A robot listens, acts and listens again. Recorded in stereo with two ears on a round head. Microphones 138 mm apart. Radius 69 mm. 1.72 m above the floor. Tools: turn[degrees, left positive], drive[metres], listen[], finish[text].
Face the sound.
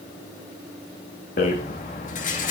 Thought: The rattle: about 50° left or 130° left.
Action: turn[50]
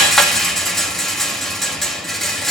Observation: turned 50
Action: finish[Facing the rattle.]